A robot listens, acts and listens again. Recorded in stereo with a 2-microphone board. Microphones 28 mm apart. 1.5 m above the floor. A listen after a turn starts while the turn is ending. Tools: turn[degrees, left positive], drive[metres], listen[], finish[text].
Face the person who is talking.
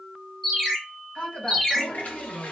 Thought: The woman speaking: about 50° left or 130° left.
Action: turn[50]
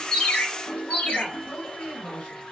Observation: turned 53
Thought: So it is at 80° left.
Action: turn[80]
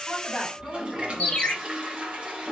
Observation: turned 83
Action: finish[Found it: a woman speaking, straight ahead.]